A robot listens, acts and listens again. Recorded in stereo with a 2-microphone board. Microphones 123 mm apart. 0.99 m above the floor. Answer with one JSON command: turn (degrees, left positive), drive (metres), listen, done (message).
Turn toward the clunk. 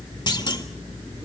{"turn": 35}
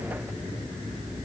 {"listen": true}
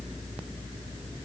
{"done": "I heard a clunk, but can't make it out now. It was about straight ahead or 110° left."}